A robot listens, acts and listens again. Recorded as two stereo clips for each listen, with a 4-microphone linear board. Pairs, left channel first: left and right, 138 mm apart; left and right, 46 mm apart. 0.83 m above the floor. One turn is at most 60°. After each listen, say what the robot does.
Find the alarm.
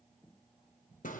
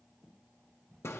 Keep listening.
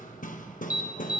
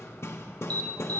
Turn 25° left.
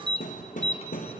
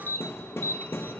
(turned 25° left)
Turn 60° left.
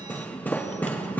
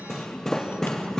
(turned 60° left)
Turn 60° left.
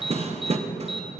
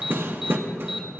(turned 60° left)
Facing the alarm, under 1 m away.